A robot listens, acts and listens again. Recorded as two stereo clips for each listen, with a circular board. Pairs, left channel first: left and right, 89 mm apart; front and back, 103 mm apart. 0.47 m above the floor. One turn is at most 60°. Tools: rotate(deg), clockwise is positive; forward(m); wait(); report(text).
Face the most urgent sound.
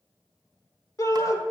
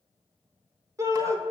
rotate(-60)
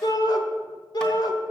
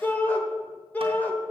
rotate(-60)
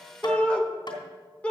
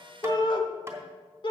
rotate(-20)
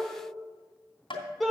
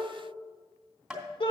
report("Facing the shout, 1 to 2 m away.")